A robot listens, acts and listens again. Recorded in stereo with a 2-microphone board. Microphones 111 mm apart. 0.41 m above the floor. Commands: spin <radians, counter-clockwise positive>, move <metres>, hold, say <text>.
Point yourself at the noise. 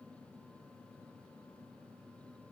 hold
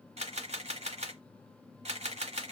spin -1.57
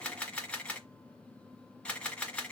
spin 0.17
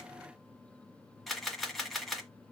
say Found it: a camera shutter, straight ahead.